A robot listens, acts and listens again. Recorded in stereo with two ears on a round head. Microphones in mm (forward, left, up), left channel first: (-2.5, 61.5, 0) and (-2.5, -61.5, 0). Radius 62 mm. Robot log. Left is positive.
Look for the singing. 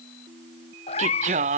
note: The singing: about 55° right or 125° right.
cmd yaw -55
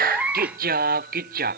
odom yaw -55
note: So it is at 65° right.
cmd yaw -65
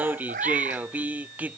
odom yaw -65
note: The singing is now 10° right.
cmd yaw -10
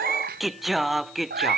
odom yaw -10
end: Found it: singing, straight ahead.